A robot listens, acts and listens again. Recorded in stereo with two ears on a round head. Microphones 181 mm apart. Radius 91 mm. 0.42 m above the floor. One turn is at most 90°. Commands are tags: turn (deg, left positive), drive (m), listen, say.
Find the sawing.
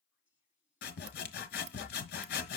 <turn deg="50"/>
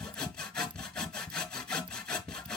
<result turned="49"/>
<say>Found it: sawing, straight ahead, 1 to 2 m away.</say>